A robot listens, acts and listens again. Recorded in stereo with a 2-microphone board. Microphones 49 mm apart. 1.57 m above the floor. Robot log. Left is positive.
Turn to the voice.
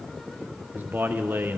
note: The man speaking: about 45° right or 135° right.
cmd yaw -45
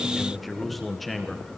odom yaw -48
end: Facing the man speaking.